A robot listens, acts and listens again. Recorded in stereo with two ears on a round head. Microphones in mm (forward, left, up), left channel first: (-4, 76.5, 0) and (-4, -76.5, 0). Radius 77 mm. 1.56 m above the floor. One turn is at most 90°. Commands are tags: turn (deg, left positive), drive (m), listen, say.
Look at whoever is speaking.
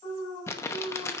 <listen/>
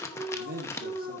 <turn deg="-55"/>
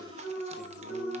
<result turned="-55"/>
<listen/>
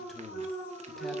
<say>Found it: a man speaking, straight ahead.</say>